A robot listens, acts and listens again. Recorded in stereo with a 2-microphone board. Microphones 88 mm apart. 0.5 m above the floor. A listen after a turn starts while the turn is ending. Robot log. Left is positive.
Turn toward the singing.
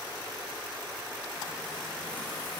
cmd idle
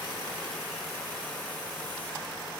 cmd idle
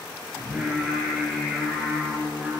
cmd yaw -30
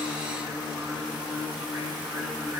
note: So it is at 140° right.
cmd yaw -140
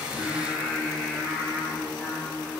end: Facing the singing, over 4 m away.